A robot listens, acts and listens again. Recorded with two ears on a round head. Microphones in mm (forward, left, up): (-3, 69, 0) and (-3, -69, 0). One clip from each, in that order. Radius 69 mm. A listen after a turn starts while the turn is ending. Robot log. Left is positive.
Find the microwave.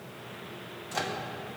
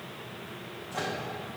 cmd yaw +90
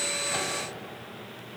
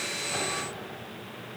cmd idle
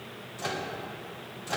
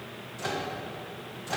note: The microwave is now 10° left.
cmd yaw +10
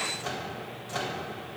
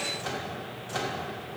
end: Found it: a microwave, straight ahead.